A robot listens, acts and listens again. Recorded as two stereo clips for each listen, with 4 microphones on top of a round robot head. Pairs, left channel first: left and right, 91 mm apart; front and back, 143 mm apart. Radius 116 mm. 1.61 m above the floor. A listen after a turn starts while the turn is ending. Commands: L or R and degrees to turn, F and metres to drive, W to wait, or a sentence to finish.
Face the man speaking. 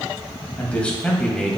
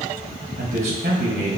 L175
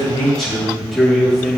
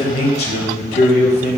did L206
L10
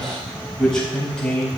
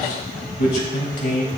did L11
L15
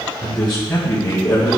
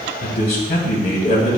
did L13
L15
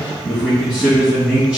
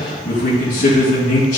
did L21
Facing the man speaking, 2 to 4 m away.